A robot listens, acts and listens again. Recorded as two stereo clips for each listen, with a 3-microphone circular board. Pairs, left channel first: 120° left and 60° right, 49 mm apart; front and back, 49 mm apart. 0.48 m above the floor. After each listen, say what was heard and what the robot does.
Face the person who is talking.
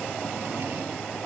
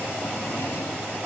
Keep listening.
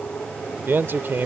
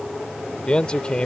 The man speaking: 65° right. Turn 65° right.
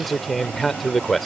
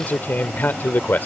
The man speaking is now 35° left. Turn 35° left.
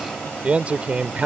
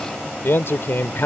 Found it: a man speaking, straight ahead.